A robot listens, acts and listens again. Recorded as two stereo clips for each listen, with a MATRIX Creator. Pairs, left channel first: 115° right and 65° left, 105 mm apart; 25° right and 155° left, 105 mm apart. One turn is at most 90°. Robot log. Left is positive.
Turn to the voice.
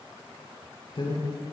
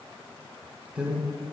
note: The man speaking: 125° right.
cmd yaw -90
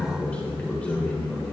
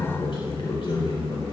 note: The man speaking is now 35° right.
cmd yaw -35
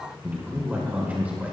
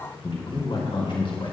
end: Found it: a man speaking, straight ahead, 2 to 4 m away.